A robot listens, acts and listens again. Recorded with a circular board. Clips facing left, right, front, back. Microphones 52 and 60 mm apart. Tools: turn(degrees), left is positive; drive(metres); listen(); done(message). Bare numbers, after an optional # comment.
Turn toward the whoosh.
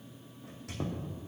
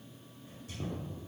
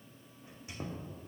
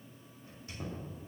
listen()
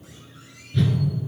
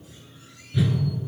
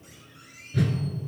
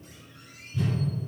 done("Facing the whoosh.")